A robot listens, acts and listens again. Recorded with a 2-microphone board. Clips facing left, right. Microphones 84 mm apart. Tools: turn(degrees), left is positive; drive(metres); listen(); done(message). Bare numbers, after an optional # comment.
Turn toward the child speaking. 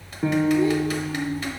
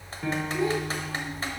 # The child speaking: about 70° right or 110° right.
turn(-70)
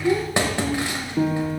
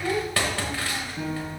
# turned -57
# So it is at 25° right.
turn(-25)
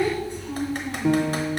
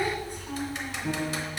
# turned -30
done("Facing the child speaking, over 4 m away.")